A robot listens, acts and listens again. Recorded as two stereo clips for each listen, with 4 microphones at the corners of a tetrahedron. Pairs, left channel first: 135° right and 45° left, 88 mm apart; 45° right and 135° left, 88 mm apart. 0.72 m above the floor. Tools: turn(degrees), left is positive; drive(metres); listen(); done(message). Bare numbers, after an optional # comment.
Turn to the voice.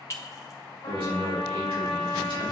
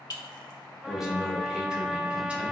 # The man speaking: 55° left.
turn(55)
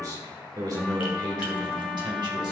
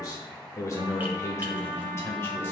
# The man speaking is now 15° left.
turn(15)
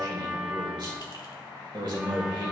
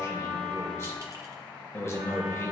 # The man speaking is now 10° left.
turn(10)
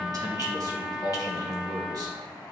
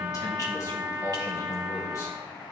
done("Facing the man speaking, 2 to 4 m away.")